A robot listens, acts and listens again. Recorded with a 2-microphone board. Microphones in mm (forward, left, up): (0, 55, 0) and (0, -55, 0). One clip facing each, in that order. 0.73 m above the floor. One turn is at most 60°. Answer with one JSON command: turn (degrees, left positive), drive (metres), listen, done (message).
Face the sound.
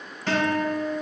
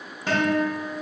{"turn": -15}
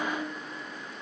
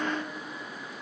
{"done": "Facing the guitar."}